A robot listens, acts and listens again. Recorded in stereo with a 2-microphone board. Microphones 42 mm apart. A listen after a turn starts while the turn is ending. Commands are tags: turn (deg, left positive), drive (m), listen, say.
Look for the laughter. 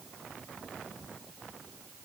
<listen/>
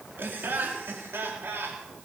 <turn deg="-65"/>
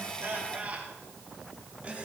<turn deg="-30"/>
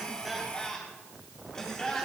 <turn deg="15"/>
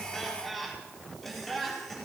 <say>Facing the laughter.</say>